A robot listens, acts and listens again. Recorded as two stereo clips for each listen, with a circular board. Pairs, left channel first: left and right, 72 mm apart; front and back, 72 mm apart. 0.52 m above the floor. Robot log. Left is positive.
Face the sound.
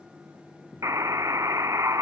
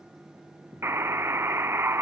note: The buzzer: 130° right.
cmd yaw -130
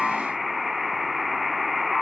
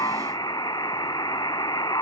end: Found it: a buzzer, straight ahead.